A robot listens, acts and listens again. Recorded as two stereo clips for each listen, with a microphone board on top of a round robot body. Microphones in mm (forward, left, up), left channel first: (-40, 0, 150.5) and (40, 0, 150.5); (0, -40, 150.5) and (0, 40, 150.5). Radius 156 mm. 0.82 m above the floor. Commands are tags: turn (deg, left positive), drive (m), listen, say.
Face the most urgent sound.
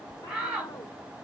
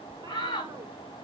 <turn deg="-80"/>
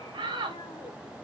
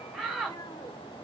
<say>Found it: a shout, straight ahead, over 4 m away.</say>